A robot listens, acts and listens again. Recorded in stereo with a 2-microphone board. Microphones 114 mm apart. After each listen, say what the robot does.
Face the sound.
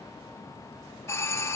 Turn 20° left.
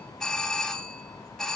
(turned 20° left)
Found it: a doorbell, straight ahead.